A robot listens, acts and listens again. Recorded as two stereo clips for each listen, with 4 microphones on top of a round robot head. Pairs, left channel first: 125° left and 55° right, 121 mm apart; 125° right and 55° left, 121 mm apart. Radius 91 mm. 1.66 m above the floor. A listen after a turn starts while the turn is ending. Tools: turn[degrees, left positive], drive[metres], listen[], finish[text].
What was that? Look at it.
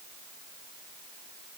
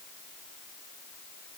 Action: listen[]
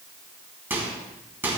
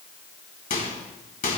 Thought: The microwave: 125° right.
Action: turn[-125]
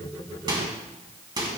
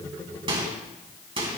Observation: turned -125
Action: finish[Facing the microwave, 2 to 4 m away.]